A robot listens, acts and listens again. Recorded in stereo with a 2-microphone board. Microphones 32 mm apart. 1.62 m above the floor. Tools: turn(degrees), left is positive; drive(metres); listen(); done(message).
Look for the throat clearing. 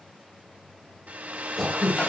turn(degrees=-30)
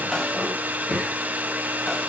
turn(degrees=25)
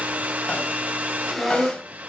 done("Facing the throat clearing.")